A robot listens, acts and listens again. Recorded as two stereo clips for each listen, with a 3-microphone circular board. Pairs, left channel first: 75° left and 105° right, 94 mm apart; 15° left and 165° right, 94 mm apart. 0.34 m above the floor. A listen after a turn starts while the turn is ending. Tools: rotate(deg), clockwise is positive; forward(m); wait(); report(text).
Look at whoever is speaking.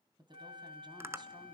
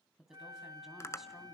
rotate(80)
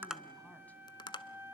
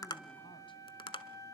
wait()
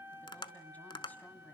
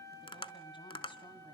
wait()
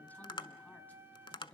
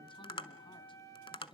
report("Facing the woman speaking, 2 to 4 m away.")